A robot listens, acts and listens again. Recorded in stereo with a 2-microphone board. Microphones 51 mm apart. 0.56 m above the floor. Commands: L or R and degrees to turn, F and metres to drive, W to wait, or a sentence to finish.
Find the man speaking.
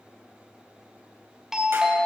W
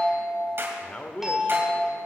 L25
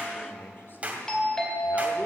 L130
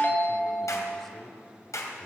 Found it: a man speaking, straight ahead, 1 to 2 m away.